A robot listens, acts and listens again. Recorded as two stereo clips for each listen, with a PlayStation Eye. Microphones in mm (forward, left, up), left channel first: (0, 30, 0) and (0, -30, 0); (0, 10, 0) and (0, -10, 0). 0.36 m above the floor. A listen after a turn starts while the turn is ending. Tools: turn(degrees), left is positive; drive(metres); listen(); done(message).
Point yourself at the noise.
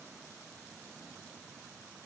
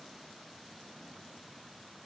listen()
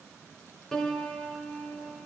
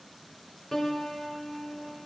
turn(degrees=30)
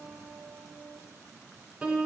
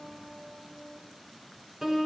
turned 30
turn(degrees=-15)
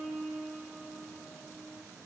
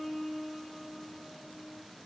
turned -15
done("Facing the piano, 1 to 2 m away.")